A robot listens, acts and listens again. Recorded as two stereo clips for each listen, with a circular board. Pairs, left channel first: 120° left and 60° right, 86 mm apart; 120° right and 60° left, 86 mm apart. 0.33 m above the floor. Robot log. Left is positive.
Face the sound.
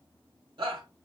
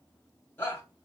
note: The shout: 55° right.
cmd yaw -55
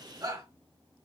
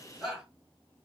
note: The shout is now 25° right.
cmd yaw -25
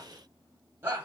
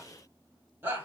end: Found it: a shout, straight ahead, 1 to 2 m away.